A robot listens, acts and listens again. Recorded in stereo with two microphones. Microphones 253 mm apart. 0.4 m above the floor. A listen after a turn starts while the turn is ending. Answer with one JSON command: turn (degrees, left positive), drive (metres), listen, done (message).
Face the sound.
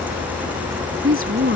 {"turn": -55}
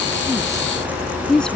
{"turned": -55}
{"done": "Facing the woman speaking."}